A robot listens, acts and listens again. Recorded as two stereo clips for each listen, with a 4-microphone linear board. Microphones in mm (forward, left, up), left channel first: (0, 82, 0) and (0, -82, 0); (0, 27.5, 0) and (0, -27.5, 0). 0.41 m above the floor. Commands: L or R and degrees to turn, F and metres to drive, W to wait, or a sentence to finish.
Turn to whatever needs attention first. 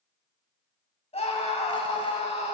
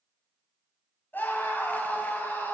L40
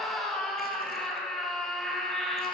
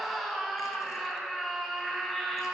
Found it: a scream, straight ahead.